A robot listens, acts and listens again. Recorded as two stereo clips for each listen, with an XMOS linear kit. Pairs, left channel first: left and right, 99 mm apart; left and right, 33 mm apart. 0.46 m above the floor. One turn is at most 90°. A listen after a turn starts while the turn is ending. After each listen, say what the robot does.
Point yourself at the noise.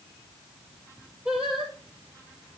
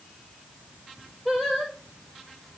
Turn 30° right.
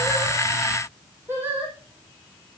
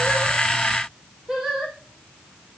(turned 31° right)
Turn 90° right.
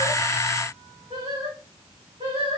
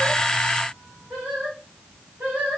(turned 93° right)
Turn 75° right.
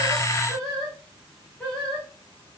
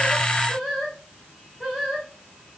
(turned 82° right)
Facing the singing.